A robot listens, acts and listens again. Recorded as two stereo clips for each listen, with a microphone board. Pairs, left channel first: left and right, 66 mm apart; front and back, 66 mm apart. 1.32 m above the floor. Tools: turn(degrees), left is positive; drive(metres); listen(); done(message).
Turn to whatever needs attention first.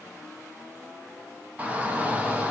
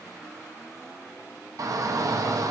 turn(degrees=-155)
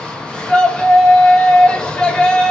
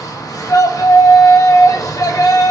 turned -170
turn(degrees=15)
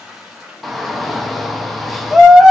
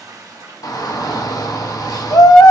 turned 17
done("Facing the shout.")